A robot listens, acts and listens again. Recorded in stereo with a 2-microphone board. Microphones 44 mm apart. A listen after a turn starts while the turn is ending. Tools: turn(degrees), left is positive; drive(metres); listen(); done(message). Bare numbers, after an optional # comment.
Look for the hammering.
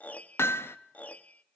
turn(90)
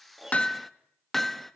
done("Facing the hammering, 1 to 2 m away.")